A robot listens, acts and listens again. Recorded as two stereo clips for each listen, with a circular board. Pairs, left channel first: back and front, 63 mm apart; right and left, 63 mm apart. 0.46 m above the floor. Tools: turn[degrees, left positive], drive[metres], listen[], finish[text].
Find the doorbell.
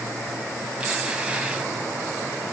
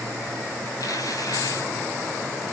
Action: listen[]
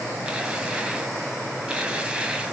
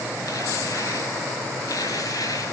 Action: listen[]
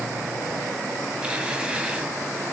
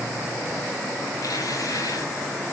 Action: finish[I can't make out a doorbell, only tearing paper.]